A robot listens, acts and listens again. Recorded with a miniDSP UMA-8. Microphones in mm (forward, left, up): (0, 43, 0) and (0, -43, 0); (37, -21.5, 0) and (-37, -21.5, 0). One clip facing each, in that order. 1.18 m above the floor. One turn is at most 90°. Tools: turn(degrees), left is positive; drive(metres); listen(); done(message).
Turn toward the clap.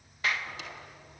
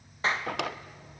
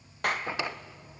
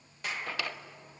turn(degrees=-30)
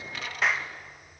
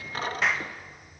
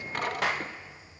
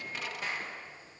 done("Found it: a clap, straight ahead.")